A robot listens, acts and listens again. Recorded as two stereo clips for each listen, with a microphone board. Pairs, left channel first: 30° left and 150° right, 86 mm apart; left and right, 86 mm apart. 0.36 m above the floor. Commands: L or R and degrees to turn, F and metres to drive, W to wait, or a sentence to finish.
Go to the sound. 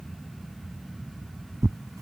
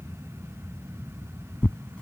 L170
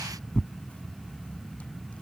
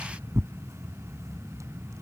R45
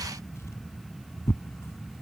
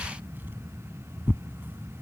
R25
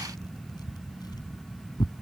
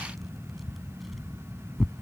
F1.0
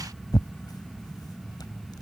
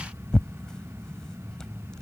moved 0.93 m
L10
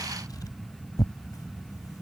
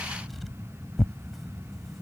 F1.0
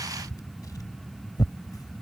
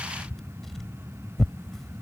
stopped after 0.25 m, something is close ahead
I am next to the tearing paper.